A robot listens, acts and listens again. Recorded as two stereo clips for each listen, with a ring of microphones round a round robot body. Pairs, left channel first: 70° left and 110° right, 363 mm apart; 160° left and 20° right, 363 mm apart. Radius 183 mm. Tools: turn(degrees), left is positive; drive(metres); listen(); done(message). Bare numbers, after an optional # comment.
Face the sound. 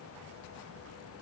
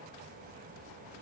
listen()
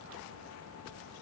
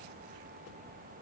listen()
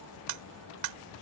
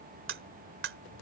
# The cutlery clinking: 80° right.
turn(-80)
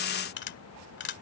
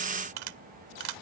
done("Found it: cutlery clinking, straight ahead.")